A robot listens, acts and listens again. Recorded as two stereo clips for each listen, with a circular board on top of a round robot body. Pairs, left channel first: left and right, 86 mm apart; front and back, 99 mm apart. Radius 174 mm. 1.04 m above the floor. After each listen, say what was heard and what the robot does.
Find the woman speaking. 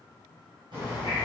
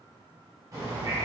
Keep listening.
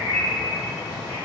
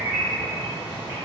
Keep listening.
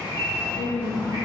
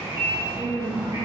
The woman speaking: 85° right. Turn 85° right.
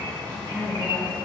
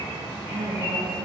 The woman speaking is now 25° right. Turn 25° right.
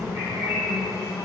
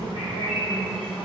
Keep listening.
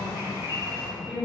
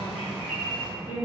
Found it: a woman speaking, straight ahead.